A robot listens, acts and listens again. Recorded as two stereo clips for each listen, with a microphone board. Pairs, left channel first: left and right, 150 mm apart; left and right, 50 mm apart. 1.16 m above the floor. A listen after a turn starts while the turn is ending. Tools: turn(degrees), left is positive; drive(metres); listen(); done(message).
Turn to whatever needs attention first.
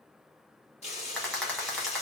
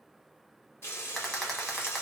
listen()
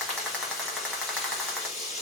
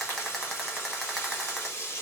listen()
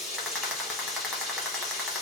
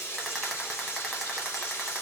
done("I can't make out anything urgent, only frying and a rattle.")